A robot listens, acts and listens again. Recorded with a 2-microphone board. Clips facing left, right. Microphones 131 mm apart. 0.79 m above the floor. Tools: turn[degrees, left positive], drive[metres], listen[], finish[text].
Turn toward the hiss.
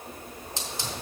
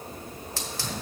Thought: The hiss: about 20° left or 160° left.
Action: turn[20]
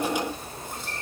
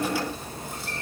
Thought: So it is at 140° left.
Action: turn[140]
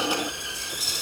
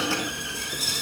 Thought: The hiss is now 25° left.
Action: turn[25]
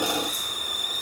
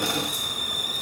Action: finish[Facing the hiss, 1 to 2 m away.]